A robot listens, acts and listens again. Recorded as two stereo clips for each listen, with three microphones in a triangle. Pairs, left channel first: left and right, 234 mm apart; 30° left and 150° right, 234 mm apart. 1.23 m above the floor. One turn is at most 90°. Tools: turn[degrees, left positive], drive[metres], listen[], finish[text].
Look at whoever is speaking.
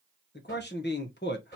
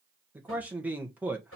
Thought: The man speaking: 130° left.
Action: turn[90]
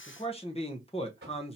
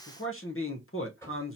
Thought: The man speaking is now 30° left.
Action: turn[30]
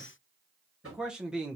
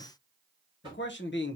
Action: finish[Found it: a man speaking, straight ahead.]